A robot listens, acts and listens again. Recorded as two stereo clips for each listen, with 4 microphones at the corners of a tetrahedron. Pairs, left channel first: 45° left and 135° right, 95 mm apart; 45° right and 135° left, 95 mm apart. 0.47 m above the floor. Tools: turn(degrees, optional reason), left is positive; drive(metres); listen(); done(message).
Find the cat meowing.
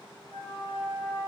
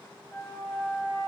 listen()
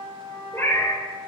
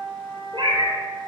turn(degrees=105, reason="The cat meowing: 105° left.")
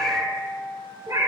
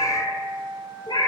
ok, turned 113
turn(degrees=-85, reason="The cat meowing is now 85° right.")
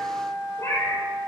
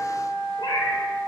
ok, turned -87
turn(degrees=-15, reason="The cat meowing is now 15° right.")
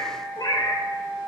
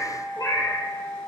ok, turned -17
done("Facing the cat meowing.")